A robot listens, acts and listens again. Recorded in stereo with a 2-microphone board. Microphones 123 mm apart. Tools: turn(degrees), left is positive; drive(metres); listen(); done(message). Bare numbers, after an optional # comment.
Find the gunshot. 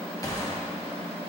# The gunshot: about 30° left or 150° left.
turn(30)
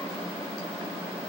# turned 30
listen()
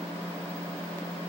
done("I heard a gunshot, but can't make it out now. It was about straight ahead or 120° left.")